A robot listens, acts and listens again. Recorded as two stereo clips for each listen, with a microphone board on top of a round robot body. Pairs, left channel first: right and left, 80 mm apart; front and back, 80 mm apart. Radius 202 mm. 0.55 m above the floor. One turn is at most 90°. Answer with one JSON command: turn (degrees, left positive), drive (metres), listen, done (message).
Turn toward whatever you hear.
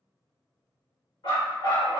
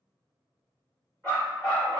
{"turn": -85}
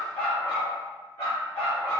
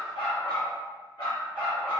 {"turn": -35}
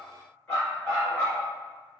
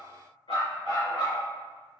{"turn": -20}
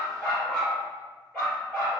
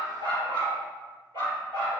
{"done": "Facing the dog barking."}